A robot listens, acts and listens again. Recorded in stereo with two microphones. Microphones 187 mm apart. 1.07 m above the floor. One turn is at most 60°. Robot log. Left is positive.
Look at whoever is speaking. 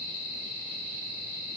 cmd idle
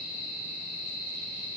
cmd idle
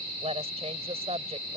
note: The woman speaking: about 35° right or 145° right.
cmd yaw -35
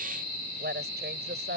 note: So it is at 115° right.
cmd yaw -60
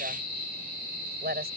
note: The woman speaking is now 60° right.
cmd yaw -60
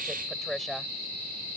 end: Found it: a woman speaking, straight ahead.